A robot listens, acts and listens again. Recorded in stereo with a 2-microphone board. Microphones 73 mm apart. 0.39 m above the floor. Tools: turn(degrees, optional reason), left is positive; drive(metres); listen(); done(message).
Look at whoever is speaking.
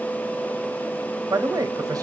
turn(degrees=-55, reason="The man speaking: about 55° right or 125° right.")
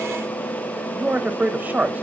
turn(degrees=-30, reason="So it is at 30° right.")
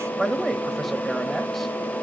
done("Found it: a man speaking, straight ahead, 1 to 2 m away.")